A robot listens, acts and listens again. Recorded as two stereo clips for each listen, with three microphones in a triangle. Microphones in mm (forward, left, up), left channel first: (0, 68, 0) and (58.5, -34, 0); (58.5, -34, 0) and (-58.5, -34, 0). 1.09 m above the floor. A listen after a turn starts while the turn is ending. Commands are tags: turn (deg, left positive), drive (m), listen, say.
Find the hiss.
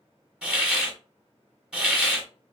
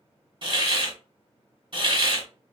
<turn deg="-140"/>
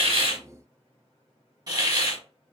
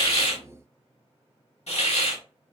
<say>Found it: a hiss, straight ahead, 1 to 2 m away.</say>